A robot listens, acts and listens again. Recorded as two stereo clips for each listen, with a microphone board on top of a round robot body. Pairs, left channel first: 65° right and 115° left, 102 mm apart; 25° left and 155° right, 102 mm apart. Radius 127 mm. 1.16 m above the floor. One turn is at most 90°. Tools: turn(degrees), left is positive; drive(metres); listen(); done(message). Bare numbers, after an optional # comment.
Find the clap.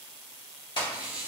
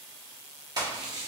# The clap: 105° right.
turn(-90)
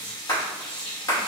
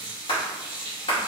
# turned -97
# The clap is now 10° right.
turn(-10)
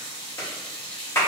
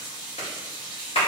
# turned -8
done("Found it: a clap, straight ahead.")